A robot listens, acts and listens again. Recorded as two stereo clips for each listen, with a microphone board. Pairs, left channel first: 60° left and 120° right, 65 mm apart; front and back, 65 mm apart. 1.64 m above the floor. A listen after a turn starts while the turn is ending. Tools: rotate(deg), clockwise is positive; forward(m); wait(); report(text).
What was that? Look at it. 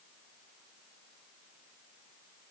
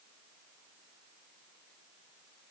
wait()
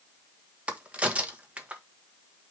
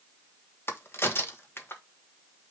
rotate(50)
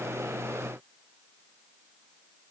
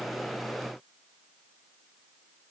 report("I heard a crack from this way, but can't make it out now.")